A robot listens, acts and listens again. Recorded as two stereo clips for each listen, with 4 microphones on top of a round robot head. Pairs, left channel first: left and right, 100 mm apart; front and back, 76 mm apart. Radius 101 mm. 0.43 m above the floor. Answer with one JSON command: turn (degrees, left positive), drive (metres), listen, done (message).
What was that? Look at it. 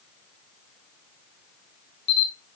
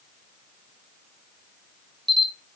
{"turn": 90}
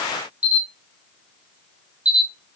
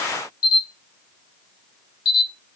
{"turn": -15}
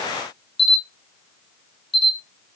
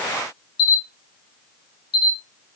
{"done": "Found it: a camera shutter, straight ahead, under 1 m away."}